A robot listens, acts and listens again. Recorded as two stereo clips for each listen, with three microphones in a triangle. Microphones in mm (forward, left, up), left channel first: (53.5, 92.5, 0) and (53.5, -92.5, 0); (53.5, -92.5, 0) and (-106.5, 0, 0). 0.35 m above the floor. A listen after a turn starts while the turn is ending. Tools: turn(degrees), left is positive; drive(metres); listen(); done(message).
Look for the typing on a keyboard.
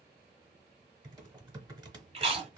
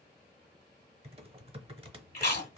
turn(degrees=-150)
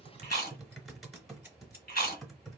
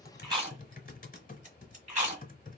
done("Found it: typing on a keyboard, straight ahead.")